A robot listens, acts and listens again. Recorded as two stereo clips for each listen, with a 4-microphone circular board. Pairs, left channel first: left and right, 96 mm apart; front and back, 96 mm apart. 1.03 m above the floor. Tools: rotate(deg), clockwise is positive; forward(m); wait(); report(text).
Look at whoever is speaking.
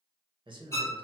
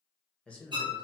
rotate(75)
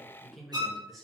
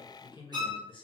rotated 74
report("Found it: a man speaking, straight ahead, under 1 m away.")